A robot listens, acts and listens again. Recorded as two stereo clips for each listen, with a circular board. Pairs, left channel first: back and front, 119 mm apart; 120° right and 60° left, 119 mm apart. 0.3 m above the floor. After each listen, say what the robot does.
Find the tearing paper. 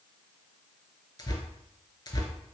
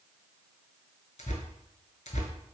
Turn 125° right.
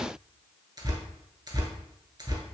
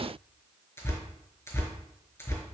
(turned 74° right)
Turn 55° right.
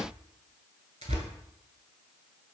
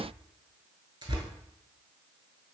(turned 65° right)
Turn 10° left.
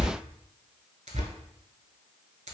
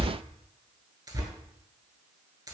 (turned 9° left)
Found it: tearing paper, straight ahead, under 1 m away.